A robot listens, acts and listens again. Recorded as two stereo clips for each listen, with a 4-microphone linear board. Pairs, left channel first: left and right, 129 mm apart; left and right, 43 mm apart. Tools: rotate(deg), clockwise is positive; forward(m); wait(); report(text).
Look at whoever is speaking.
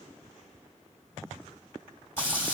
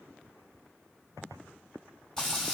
wait()
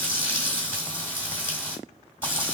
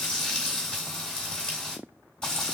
wait()
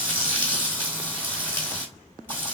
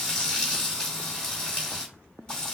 rotate(-30)
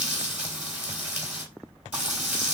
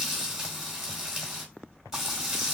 report("Facing the child speaking, 1 to 2 m away.")